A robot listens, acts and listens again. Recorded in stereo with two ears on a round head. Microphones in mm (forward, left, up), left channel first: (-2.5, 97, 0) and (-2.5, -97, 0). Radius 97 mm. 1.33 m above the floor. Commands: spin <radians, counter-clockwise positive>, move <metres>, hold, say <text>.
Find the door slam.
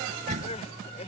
spin -0.52
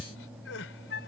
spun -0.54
hold
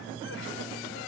say I heard a door slam, but can't make it out now. It was about straight ahead or 115° right.